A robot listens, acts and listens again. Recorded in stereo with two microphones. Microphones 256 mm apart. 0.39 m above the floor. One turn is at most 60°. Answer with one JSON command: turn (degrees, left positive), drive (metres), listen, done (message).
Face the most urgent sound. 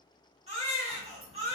{"turn": -25}
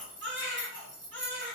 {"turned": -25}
{"turn": -60}
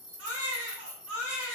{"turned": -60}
{"turn": -60}
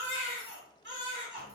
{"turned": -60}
{"turn": -50}
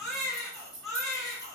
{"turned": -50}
{"done": "Facing the baby crying."}